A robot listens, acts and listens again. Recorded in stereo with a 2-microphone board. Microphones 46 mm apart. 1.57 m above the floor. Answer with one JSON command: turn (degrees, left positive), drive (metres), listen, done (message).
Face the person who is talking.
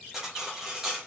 {"listen": true}
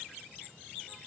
{"listen": true}
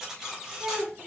{"turn": -50}
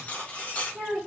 {"done": "Found it: a child speaking, straight ahead, 2 to 4 m away."}